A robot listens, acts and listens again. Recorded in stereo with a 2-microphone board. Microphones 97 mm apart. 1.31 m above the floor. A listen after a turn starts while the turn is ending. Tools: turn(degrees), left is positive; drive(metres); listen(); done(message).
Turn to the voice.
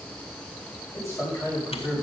turn(degrees=30)
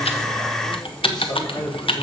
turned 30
turn(degrees=125)
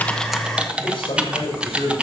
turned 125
turn(degrees=60)
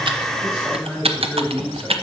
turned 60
turn(degrees=-10)
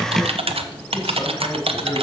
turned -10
listen()
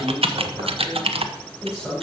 done("Found it: a man speaking, straight ahead, over 4 m away.")